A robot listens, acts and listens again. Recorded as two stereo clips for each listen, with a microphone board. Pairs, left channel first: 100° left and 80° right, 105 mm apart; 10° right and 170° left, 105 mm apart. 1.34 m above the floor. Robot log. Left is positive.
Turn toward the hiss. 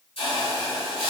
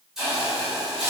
note: The hiss: 85° left.
cmd yaw +85
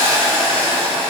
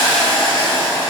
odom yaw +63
note: The hiss is now 20° left.
cmd yaw +20
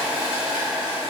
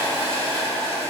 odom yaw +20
end: Facing the hiss, 1 to 2 m away.